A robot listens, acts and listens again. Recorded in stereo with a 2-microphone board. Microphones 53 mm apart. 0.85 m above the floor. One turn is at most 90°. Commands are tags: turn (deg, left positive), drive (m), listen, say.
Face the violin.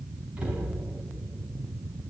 <listen/>
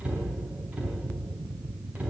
<listen/>
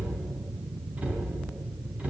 <say>I can't make out a violin to turn to.</say>